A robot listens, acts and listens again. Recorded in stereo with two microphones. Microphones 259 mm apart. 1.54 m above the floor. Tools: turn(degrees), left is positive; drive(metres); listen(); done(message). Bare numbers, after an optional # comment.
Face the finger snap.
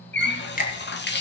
# The finger snap: about 35° left or 145° left.
turn(35)
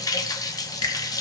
# So it is at 110° left.
turn(110)
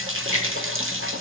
# The finger snap is now 30° left.
turn(30)
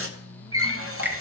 # The finger snap is now 10° right.
turn(-10)
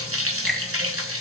done("Found it: a finger snap, straight ahead.")